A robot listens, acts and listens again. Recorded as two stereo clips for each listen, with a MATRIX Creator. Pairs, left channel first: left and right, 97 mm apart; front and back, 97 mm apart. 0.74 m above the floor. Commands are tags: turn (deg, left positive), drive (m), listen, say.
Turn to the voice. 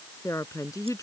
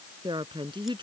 <turn deg="145"/>
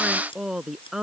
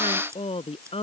<say>Found it: a woman speaking, straight ahead.</say>